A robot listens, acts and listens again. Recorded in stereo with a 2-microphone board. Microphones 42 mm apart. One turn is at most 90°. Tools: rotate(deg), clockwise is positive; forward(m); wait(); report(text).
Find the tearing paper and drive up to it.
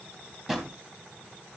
wait()
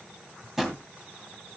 wait()
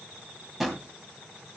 report("I can't make out tearing paper to turn to.")